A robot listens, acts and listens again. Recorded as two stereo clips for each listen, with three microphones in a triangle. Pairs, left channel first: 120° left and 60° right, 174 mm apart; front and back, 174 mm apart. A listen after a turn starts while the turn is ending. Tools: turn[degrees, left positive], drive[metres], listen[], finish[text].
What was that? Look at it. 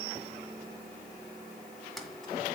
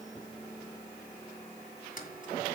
Thought: The keys jangling: 30° left.
Action: turn[30]
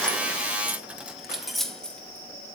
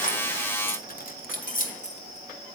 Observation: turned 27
Thought: The keys jangling is now 35° left.
Action: turn[35]
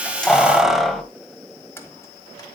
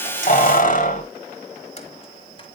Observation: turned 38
Thought: The keys jangling is now 35° left.
Action: turn[35]
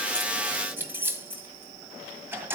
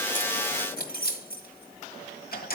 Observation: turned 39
Thought: The keys jangling is now 15° left.
Action: turn[15]
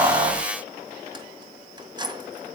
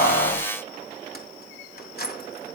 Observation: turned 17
Action: finish[Found it: keys jangling, straight ahead, 1 to 2 m away.]